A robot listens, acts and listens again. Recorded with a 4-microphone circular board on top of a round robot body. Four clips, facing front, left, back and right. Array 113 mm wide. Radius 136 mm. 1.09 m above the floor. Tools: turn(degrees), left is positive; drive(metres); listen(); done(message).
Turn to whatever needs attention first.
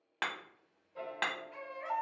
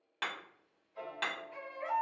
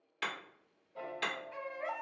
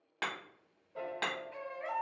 turn(degrees=175)
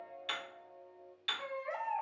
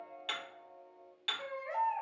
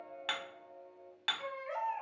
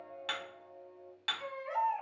turn(degrees=25)
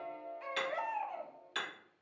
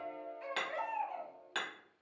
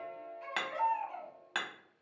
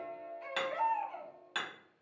done("Facing the baby crying, 1 to 2 m away.")